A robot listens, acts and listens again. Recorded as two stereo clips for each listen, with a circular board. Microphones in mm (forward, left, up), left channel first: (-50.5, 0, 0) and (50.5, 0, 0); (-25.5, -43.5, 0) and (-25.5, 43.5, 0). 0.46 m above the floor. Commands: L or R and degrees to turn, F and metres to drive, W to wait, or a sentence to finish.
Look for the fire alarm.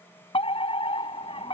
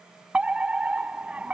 L165
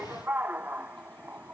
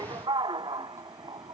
L70
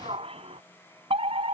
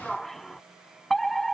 Found it: a fire alarm, straight ahead.